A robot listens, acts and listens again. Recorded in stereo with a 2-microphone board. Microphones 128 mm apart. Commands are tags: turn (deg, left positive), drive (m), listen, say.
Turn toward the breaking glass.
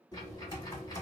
<listen/>
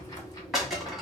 <turn deg="30"/>
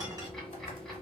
<listen/>
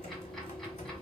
<say>I heard breaking glass, but can't make it out now. It was about 30° right or 150° left.</say>